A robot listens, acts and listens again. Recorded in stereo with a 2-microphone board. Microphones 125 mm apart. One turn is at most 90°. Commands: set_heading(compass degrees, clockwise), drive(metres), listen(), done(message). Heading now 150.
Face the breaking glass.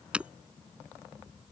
set_heading(180)
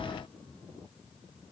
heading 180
listen()
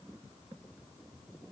done("I heard breaking glass, but can't make it out now. It was about 20° left or 140° right.")